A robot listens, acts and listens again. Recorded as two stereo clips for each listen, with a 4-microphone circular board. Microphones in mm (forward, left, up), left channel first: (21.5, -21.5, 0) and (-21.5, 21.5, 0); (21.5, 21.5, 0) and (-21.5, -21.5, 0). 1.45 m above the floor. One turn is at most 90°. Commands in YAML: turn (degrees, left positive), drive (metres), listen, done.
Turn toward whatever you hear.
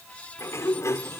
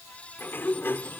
turn: -10
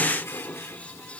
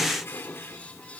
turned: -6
done: "Found it: a sliding door, straight ahead."